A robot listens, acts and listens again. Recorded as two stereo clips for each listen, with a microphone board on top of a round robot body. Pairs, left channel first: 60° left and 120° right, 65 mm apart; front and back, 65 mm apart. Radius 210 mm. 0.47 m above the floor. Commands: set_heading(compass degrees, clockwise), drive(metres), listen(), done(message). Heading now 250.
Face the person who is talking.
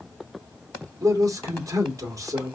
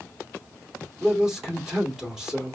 set_heading(350)
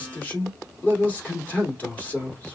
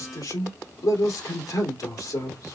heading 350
done("Found it: a man speaking, straight ahead.")